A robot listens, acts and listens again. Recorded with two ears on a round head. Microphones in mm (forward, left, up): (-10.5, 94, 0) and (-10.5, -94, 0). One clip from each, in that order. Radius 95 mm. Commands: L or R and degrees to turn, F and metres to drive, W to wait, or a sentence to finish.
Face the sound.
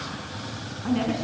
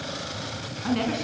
R20
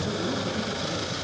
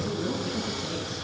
Found it: a woman speaking, straight ahead.